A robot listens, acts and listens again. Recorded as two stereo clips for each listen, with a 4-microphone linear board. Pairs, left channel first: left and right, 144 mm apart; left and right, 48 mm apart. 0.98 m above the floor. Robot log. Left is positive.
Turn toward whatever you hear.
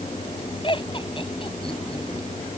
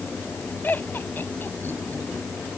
note: The laughter: about 40° left or 140° left.
cmd yaw +40
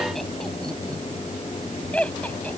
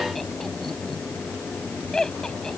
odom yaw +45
note: So it is at 10° left.
cmd yaw +10
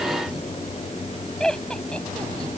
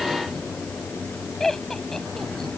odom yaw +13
end: Facing the laughter.